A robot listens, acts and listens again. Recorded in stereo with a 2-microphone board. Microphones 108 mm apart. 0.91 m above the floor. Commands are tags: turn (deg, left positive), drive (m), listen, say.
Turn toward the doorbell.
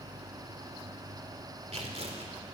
<listen/>
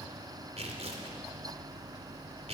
<listen/>
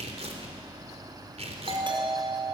<turn deg="-50"/>
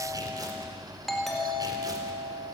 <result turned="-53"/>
<say>Facing the doorbell, over 4 m away.</say>